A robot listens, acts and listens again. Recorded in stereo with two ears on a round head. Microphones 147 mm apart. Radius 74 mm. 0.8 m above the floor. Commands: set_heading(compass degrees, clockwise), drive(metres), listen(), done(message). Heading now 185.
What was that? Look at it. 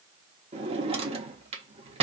set_heading(220)
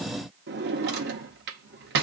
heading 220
set_heading(325)
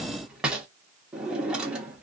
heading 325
done("Found it: a drawer, straight ahead.")